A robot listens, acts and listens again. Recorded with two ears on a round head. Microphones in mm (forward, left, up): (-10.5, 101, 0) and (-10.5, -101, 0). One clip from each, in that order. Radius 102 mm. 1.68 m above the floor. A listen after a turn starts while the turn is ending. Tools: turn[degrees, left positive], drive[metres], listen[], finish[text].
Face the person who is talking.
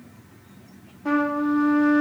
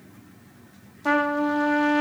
Action: listen[]
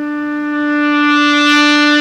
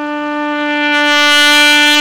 Action: listen[]
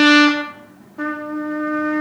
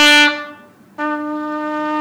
Action: finish[I can't make out anyone speaking to turn to.]